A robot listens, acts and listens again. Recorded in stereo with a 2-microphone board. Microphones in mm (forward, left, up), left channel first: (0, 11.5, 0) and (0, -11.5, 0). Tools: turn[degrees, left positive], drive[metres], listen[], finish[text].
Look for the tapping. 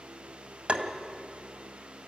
Thought: The tapping: about 60° right or 120° right.
Action: turn[-60]
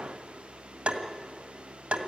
Thought: So it is at 60° right.
Action: turn[-60]
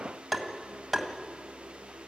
Action: finish[Facing the tapping, 1 to 2 m away.]